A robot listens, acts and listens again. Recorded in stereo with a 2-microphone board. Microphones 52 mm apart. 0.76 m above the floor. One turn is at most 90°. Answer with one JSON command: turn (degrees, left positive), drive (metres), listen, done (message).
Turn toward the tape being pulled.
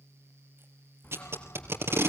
{"turn": -60}
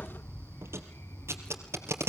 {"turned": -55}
{"turn": -65}
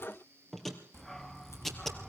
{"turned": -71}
{"done": "Found it: tape being pulled, straight ahead, 2 to 4 m away."}